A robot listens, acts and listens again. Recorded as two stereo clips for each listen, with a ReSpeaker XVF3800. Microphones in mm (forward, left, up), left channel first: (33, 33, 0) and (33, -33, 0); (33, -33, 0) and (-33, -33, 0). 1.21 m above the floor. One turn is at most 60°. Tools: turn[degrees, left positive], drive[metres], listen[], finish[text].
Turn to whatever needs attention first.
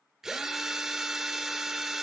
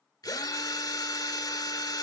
Action: listen[]
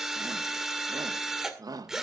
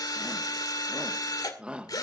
Thought: The shout: 105° right.
Action: turn[-60]
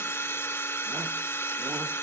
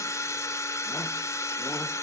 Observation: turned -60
Thought: Nothing new. It was at 45° right.
Action: turn[-45]
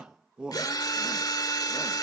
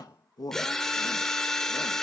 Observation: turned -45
Thought: The shout is now 15° right.
Action: turn[-15]
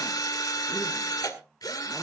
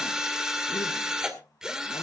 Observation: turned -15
Action: listen[]
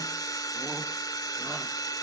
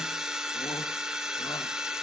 Action: listen[]
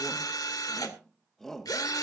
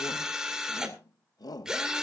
Action: finish[Facing the shout, under 1 m away.]